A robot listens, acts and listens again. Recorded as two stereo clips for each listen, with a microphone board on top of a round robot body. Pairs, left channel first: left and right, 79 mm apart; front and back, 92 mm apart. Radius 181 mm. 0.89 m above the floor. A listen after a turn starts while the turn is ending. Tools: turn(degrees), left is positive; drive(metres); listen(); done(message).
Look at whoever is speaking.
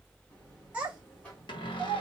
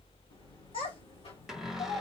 turn(degrees=-15)
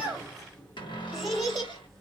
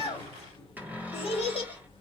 done("Facing the child speaking.")